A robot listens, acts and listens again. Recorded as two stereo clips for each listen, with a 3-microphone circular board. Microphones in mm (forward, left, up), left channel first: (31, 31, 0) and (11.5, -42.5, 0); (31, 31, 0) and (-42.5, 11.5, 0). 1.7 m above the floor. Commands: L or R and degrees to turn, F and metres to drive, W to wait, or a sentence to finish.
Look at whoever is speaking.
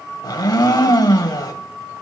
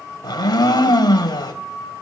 W
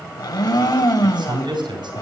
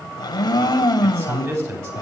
R115
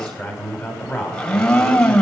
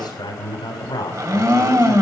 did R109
Found it: a man speaking, straight ahead.